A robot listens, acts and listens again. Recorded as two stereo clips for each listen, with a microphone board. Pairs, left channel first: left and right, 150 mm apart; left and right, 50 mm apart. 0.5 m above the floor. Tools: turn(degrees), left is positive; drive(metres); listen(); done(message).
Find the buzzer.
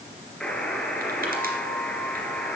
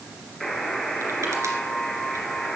turn(degrees=30)
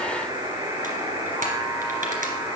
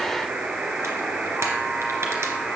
turn(degrees=-25)
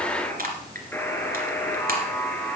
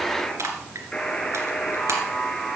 turn(degrees=15)
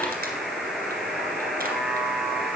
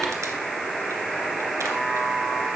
done("Found it: a buzzer, straight ahead.")